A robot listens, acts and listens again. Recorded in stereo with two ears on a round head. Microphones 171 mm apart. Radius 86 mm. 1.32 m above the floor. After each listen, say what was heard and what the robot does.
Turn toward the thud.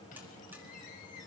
Keep listening.
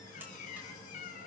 Keep listening.
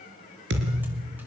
The thud: about 65° right or 115° right. Turn 65° right.
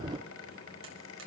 Keep listening.
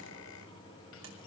I heard a thud, but can't make it out now. It was about straight ahead or 50° right.